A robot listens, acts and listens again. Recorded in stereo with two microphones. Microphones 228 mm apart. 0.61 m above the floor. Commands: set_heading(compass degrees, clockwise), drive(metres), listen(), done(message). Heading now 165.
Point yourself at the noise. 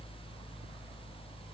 listen()
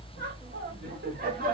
set_heading(205)
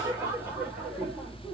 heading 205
done("Facing the laughter.")